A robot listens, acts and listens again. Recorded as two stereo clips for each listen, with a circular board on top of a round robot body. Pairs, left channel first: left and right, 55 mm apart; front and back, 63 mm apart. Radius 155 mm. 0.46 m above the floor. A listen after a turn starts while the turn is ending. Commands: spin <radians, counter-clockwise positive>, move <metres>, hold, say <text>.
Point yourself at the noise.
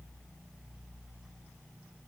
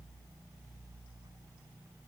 hold
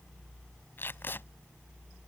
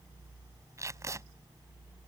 spin 2.44
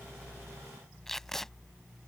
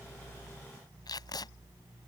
say Facing the tape being pulled.